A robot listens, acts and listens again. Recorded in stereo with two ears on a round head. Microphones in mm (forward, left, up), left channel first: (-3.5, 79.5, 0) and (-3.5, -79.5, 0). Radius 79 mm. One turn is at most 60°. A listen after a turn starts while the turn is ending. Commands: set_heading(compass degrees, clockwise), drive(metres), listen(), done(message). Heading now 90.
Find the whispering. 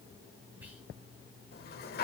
set_heading(120)
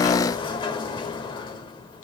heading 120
listen()
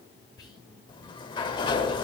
set_heading(95)
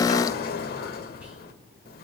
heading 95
listen()
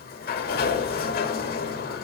listen()
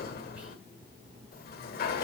done("Facing where the whispering came from. I can't hear it now.")